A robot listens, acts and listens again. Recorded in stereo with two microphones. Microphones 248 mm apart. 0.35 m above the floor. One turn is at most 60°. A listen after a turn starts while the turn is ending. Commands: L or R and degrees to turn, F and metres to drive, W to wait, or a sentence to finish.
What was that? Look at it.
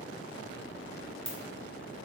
L25
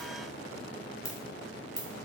L60
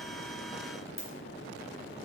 L60
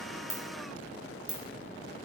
L10
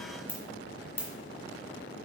L10
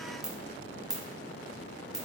Facing the ringtone.